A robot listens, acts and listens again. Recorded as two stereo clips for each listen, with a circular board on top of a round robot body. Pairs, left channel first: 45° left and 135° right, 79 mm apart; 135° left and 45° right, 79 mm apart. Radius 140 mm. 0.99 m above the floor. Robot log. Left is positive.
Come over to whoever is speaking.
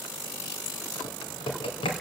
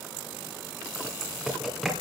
cmd idle
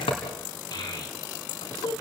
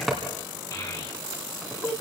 note: The child speaking: 85° left.
cmd yaw +85
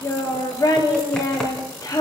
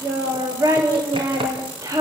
cmd fwd 1.0
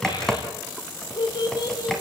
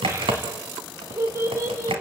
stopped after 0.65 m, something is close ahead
note: The child speaking is now 10° left.
cmd yaw +10
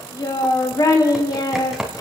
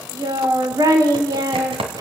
end: Something is in my way. I am facing the child speaking but have not reached it.